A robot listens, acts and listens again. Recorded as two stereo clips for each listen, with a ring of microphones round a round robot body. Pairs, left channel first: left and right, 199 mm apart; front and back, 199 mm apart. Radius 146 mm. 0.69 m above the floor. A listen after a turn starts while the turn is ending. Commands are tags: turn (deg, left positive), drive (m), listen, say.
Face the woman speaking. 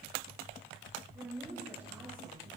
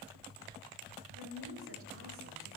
<turn deg="-170"/>
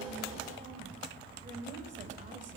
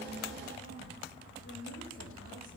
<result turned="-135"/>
<turn deg="-35"/>
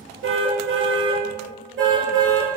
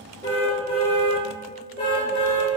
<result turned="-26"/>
<turn deg="-10"/>
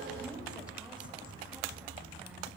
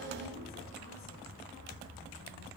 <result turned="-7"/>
<listen/>
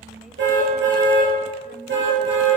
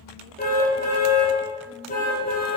<say>I heard a woman speaking from this way, but can't make it out now.</say>